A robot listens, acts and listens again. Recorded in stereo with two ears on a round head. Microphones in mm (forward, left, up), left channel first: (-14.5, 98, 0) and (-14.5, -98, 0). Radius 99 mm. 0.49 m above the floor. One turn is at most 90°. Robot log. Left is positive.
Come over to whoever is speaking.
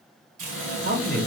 note: The man speaking: about 35° right or 145° right.
cmd yaw -35
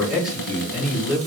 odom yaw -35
cmd fwd 1.0
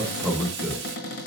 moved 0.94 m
cmd fwd 1.0
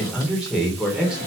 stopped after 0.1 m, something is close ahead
end: I am next to the man speaking.